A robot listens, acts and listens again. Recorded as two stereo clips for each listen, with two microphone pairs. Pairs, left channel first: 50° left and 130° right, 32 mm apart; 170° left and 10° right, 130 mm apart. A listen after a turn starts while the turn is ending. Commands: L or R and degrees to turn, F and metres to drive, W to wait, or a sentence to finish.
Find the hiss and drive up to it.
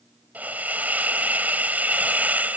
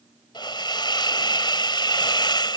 R140
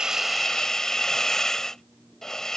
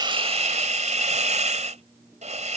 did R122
R20
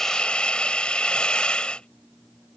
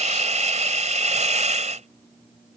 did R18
F1.0
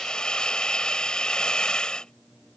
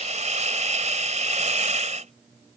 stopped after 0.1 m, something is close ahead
Blocked. The hiss is further on, straight ahead.